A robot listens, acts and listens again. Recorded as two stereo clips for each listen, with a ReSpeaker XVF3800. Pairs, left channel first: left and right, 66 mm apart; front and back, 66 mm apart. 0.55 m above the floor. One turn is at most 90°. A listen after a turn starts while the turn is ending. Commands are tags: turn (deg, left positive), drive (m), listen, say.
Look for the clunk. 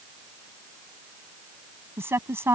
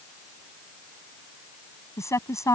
<listen/>
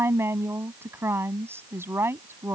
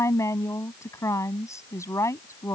<listen/>
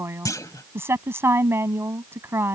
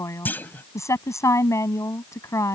<turn deg="60"/>
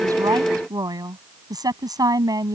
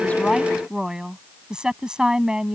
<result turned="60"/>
<say>Facing where the clunk came from. I can't hear it now.</say>